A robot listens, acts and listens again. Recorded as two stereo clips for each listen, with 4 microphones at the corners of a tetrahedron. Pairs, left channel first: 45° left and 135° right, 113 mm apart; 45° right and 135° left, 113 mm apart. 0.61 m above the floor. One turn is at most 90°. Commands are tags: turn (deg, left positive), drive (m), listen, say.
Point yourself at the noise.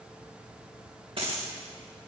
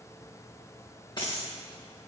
<turn deg="-90"/>
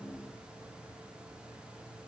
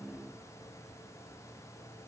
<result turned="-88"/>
<say>Facing where the dropped coin came from. I can't hear it now.</say>